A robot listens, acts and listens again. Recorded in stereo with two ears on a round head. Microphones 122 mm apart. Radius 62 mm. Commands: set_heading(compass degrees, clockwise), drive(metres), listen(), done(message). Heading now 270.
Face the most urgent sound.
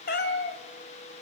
listen()
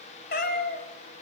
listen()
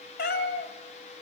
done("I can't make out anything urgent, only a cat meowing.")